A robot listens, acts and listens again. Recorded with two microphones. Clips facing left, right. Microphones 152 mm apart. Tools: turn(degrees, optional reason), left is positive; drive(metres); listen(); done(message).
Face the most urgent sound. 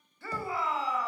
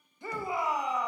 turn(degrees=-20, reason="The shout: about 20° right or 160° right.")
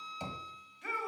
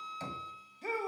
turn(degrees=-140, reason="So it is at 140° right.")
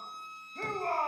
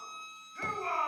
turn(degrees=35, reason="The shout is now 35° left.")
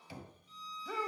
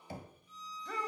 done("Found it: a shout, straight ahead, 1 to 2 m away.")